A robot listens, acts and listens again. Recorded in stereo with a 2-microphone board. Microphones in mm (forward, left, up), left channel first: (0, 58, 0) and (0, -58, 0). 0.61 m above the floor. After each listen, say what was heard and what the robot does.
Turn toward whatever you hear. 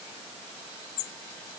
Keep listening.
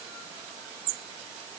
Keep listening.
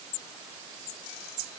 I can't make out anything to turn to.